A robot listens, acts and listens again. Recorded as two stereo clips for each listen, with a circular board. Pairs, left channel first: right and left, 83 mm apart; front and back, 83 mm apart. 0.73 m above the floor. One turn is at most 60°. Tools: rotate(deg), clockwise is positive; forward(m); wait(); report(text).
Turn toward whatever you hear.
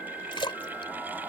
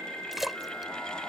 rotate(60)
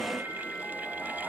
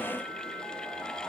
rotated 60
rotate(30)
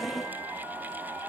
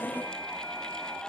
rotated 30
report("Facing where the splash came from. I can't hear it now.")